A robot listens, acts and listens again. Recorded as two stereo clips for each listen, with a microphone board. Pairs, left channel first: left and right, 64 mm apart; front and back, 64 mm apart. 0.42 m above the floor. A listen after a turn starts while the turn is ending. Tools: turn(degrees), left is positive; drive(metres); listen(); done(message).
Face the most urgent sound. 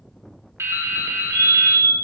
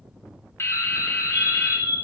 turn(degrees=140)
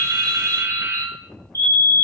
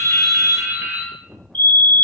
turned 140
turn(degrees=60)
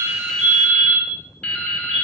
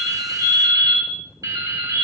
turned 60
turn(degrees=-15)
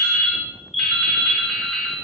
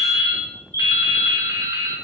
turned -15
done("Facing the fire alarm, 2 to 4 m away.")